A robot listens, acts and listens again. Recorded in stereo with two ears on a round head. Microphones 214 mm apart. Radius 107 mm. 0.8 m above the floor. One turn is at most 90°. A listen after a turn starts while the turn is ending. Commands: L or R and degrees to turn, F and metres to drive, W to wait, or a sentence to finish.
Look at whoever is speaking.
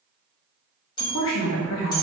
L60
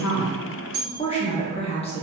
L30
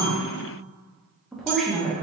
Facing the woman speaking, under 1 m away.